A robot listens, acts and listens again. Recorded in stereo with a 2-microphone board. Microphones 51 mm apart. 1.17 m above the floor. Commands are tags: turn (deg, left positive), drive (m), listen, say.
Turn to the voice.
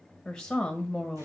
<turn deg="30"/>
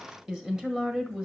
<turn deg="-15"/>
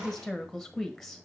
<say>Facing the woman speaking.</say>